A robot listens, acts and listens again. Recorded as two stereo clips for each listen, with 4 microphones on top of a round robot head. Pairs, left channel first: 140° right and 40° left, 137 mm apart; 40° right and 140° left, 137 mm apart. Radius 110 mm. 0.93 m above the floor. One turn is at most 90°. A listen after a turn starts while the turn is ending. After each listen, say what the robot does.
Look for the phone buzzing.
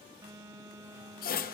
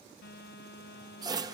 Turn 35° right.
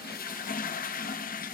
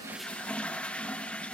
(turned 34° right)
Keep listening.
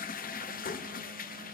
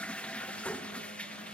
Keep listening.
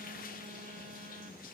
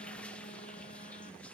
I heard a phone buzzing from this way, but can't make it out now.